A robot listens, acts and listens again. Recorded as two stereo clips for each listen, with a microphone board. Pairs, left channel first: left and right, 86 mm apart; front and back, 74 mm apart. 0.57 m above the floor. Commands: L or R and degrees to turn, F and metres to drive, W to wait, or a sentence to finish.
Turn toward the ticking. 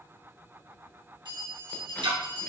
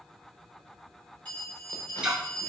R100
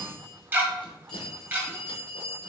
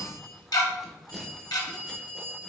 R25
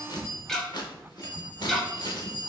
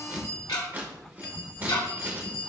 Found it: ticking, straight ahead, 1 to 2 m away.